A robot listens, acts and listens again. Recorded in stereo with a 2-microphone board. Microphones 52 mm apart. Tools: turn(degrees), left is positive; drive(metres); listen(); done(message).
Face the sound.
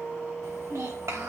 turn(degrees=-90)
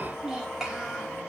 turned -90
turn(degrees=-10)
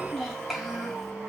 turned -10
done("Facing the child speaking.")